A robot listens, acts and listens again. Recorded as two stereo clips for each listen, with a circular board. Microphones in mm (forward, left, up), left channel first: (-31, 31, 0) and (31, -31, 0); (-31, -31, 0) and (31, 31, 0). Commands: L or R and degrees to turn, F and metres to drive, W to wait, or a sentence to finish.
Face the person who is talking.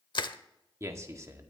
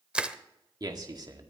L10
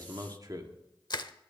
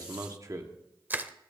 Facing the man speaking.